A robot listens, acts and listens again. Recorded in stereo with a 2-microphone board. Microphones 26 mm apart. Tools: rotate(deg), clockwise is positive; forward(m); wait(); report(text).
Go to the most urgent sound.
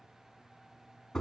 wait()
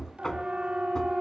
rotate(35)
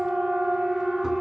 forward(1.0)
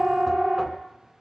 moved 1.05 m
forward(1.0)
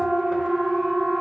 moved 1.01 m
forward(1.0)
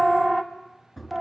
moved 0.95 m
forward(1.0)
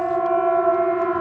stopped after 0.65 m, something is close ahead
report("I am next to the siren.")